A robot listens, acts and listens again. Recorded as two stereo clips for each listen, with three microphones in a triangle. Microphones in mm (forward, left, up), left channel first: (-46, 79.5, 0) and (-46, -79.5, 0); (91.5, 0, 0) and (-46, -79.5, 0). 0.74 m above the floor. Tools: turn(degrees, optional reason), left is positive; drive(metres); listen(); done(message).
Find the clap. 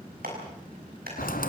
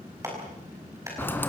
turn(degrees=-80, reason="The clap: 80° right.")
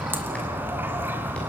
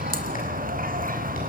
listen()
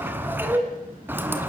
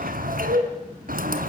listen()
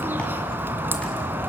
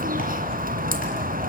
done("I heard a clap from this way, but can't make it out now.")